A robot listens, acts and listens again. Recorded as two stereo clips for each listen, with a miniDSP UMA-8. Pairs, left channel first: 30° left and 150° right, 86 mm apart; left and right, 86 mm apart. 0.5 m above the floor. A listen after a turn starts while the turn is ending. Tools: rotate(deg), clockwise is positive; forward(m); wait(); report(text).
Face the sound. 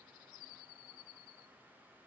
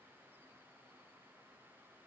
wait()
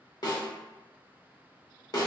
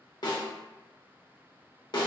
rotate(-65)
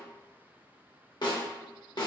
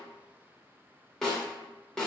report("Facing the snare drum.")